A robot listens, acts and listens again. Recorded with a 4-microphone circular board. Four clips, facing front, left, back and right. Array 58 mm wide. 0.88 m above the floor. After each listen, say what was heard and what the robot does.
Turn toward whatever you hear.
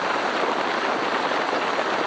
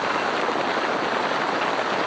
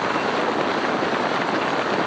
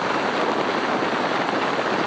Keep listening.
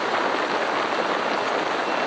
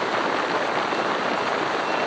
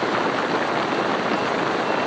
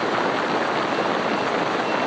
Keep listening.
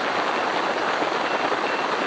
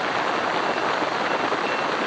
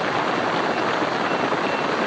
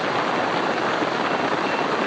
I can't make out anything to turn to.